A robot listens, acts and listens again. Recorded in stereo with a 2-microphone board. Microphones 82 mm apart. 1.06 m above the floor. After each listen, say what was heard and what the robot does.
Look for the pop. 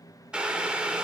Keep listening.
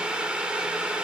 Keep listening.
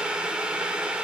I can't make out a pop, only boiling.